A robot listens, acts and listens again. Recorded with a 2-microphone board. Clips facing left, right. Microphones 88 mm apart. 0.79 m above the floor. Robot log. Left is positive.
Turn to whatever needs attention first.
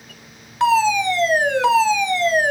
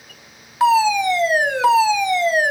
cmd yaw -30
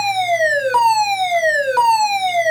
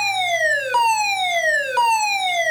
note: So it is at 20° left.
cmd yaw +20
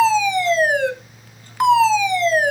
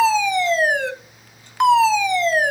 end: Found it: a fire alarm, straight ahead.